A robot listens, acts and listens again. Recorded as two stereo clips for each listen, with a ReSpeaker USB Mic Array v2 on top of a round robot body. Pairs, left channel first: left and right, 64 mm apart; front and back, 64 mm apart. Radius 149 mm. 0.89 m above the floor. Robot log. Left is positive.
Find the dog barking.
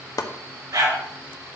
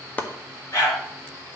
note: The dog barking: 50° right.
cmd yaw -50
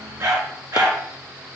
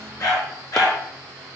note: The dog barking is now 40° right.
cmd yaw -40
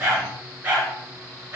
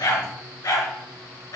note: The dog barking is now 25° right.
cmd yaw -25
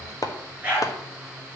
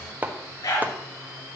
note: The dog barking is now 20° right.
cmd yaw -20
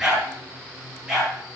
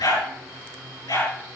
end: Facing the dog barking.